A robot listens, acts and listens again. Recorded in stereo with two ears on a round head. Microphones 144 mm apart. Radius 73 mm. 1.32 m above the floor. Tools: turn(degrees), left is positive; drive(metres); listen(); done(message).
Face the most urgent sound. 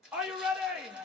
turn(degrees=-30)
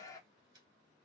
turn(degrees=20)
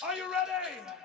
done("Facing the shout.")